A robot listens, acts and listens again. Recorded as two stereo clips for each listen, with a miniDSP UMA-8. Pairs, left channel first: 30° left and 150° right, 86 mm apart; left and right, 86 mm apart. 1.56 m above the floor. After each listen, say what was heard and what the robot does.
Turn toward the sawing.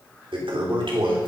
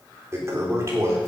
Keep listening.
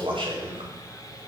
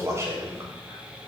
The sawing: 15° right. Turn 15° right.
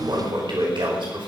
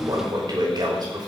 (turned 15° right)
Keep listening.
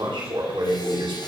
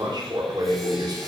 Keep listening.
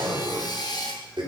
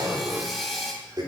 Facing the sawing.